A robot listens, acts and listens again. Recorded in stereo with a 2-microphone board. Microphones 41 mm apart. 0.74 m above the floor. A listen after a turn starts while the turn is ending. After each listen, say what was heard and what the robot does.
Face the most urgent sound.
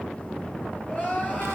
The crying: about 35° left or 145° left. Turn 35° left.
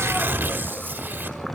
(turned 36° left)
Keep listening.
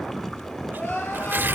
So it is at 105° left. Turn 105° left.
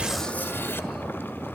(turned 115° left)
Nothing new. It was at 10° right. Turn 10° right.
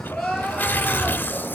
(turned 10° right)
Facing the crying.